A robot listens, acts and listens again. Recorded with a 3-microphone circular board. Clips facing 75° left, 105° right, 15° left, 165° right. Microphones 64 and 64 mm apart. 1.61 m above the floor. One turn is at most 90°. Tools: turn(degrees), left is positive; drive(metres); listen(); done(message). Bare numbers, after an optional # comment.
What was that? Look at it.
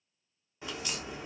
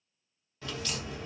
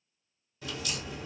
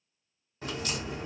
# The crack: 150° left.
turn(90)
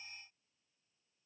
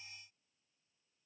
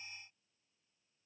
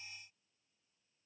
# Nothing new. It was at 60° left.
turn(60)
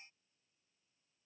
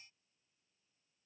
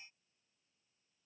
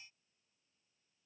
done("Facing where the crack came from. I can't hear it now.")